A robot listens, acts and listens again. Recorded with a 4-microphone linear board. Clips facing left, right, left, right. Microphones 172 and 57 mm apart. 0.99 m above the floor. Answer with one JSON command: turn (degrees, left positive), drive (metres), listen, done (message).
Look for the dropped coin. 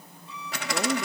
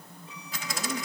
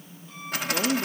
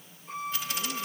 {"turn": 70}
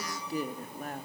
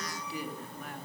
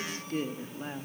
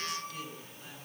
{"listen": true}
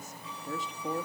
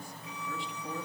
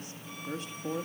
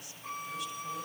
{"done": "I heard a dropped coin, but can't make it out now. It was about straight ahead or 40° left."}